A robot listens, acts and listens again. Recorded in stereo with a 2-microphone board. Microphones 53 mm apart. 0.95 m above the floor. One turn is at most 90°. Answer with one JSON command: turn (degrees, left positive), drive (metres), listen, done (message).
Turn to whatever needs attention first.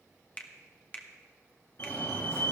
{"turn": 50}
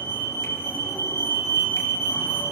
{"turn": 65}
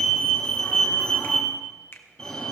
{"turn": 15}
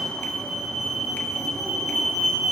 {"done": "Facing the fire alarm, 2 to 4 m away."}